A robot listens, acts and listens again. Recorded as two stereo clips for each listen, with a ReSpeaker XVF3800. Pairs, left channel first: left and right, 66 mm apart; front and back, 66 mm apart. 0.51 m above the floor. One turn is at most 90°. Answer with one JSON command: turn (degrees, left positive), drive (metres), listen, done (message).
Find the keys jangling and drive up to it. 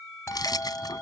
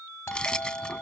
{"turn": 75}
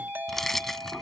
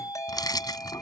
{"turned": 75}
{"drive": 1.0}
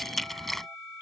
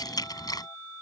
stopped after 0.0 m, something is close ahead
{"done": "Something is in my way. I am facing the keys jangling but have not reached it."}